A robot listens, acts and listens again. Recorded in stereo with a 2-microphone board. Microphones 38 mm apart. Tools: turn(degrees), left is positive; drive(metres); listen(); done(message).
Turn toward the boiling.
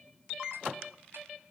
listen()
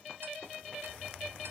listen()
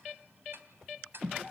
done("I can't make out boiling to turn to.")